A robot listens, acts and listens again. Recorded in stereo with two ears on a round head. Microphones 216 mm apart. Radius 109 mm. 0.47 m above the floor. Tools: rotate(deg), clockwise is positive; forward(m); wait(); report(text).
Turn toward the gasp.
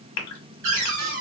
rotate(-90)
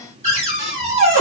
report("Facing where the gasp came from. I can't hear it now.")